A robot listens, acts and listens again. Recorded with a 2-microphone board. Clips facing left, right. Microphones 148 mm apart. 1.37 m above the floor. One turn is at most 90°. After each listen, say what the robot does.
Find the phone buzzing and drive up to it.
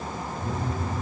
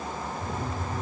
Turn 30° left.
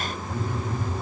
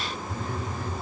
Turn 90° left.
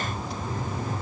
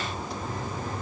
Turn 30° left.
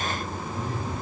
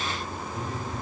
Drive 1.0 m forward.
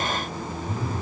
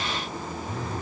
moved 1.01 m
Turn 10° left.
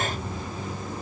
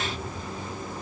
Keep listening.
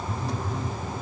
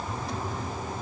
Drive 1.0 m forward.
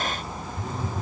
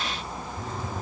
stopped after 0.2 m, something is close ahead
I am next to the phone buzzing.